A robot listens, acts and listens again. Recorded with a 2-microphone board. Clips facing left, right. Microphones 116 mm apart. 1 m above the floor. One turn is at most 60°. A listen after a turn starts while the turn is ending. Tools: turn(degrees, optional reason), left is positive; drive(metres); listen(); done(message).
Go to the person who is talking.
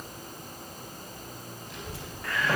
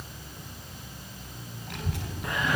turn(degrees=-60, reason="The child speaking: about 65° right or 115° right.")
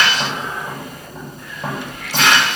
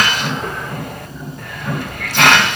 turn(degrees=-50, reason="So it is at 50° right.")
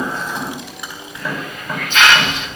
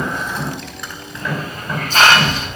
drive(metres=1.0)
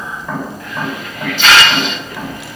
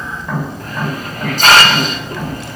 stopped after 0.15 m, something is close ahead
done("Something is in my way. I am facing the child speaking but have not reached it.")